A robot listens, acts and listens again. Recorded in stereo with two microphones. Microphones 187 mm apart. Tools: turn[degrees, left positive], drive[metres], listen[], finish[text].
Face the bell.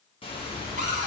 Thought: The bell: about 30° left or 150° left.
Action: turn[30]
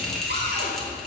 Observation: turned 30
Action: finish[Facing the bell, 1 to 2 m away.]